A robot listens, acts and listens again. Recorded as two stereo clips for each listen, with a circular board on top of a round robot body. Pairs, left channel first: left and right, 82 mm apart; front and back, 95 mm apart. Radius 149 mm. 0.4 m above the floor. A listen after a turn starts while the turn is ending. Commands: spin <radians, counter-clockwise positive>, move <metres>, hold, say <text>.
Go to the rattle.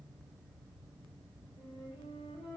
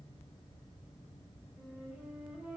hold
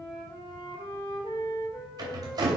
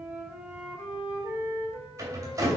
spin -2.18
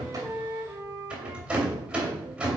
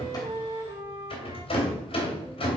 spin -0.26
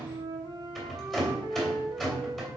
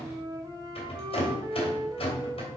move 1.0
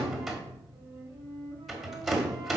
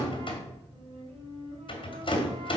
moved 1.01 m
move 1.0
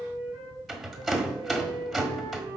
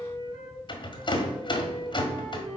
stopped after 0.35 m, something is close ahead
say Arrived at the rattle, straight ahead.